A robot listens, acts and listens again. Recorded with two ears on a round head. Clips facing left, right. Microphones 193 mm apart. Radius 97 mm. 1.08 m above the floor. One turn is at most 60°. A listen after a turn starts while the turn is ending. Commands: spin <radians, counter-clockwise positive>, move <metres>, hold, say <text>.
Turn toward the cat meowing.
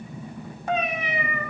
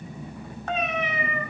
spin 0.52
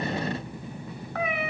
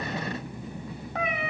spin -0.35
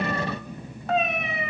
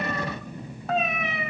say Facing the cat meowing.